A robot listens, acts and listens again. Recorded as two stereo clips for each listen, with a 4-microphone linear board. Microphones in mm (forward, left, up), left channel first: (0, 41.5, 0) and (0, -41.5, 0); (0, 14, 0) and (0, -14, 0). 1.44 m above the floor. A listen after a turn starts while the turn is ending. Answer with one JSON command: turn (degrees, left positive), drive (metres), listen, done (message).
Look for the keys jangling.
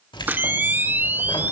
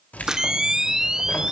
{"turn": 70}
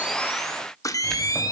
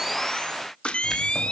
{"listen": true}
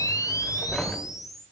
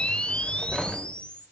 {"done": "Facing the keys jangling."}